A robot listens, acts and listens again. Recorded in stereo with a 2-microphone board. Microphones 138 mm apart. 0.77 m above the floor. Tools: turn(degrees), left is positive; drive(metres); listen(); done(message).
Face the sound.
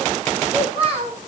turn(degrees=-45)
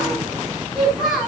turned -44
done("Facing the child speaking.")